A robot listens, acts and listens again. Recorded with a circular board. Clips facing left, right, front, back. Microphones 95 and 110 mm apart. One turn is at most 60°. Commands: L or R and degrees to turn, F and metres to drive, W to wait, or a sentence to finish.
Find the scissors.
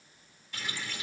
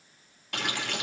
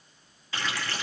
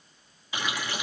W
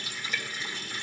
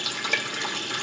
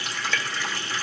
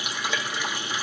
W
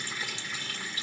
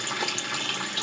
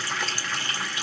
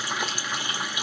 I can't make out scissors, only a running tap.